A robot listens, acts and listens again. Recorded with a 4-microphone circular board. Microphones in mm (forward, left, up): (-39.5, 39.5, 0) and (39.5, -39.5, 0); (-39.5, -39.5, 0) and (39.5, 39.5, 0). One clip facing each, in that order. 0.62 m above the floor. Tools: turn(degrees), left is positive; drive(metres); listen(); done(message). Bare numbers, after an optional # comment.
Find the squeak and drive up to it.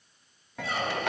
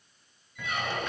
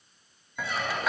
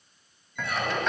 # The squeak: 75° left.
turn(75)
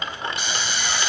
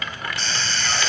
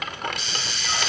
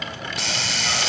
listen()
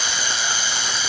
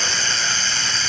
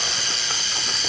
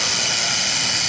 listen()
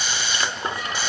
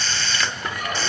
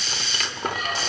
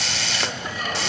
drive(1.0)
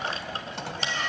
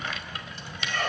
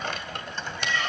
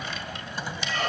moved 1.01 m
drive(1.0)
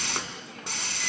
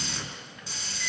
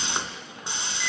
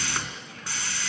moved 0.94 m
listen()
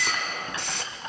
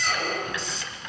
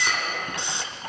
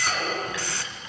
drive(1.0)
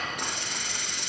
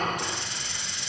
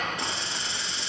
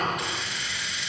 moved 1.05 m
drive(1.0)
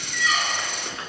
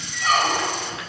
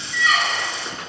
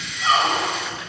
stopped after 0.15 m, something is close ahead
# The squeak is now 10° right.
turn(-10)
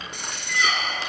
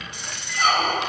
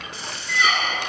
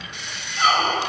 done("Arrived at the squeak, straight ahead.")